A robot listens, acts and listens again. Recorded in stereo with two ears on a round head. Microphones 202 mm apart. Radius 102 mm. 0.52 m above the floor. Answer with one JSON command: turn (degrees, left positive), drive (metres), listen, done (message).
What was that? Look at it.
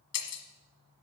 {"turn": 70}
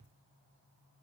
{"listen": true}
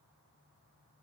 {"done": "I heard breaking glass, but can't make it out now. It was about straight ahead or 40° left."}